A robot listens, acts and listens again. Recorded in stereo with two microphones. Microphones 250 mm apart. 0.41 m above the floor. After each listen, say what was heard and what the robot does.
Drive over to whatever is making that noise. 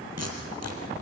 Turn 90° right.
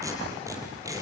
So it is at 15° right. Turn 15° right.
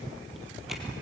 Keep listening.
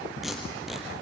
Drive 1.0 m forward.
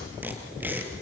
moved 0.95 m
The tape being pulled is now 10° right. Turn 10° right.
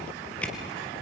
Drive 1.0 m forward.
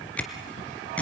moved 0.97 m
Drive 1.0 m forward.
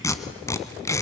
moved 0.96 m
The tape being pulled is now 10° left. Turn 10° left.
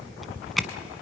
Drive 1.0 m forward.
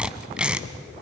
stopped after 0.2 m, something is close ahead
Arrived at the tape being pulled, straight ahead.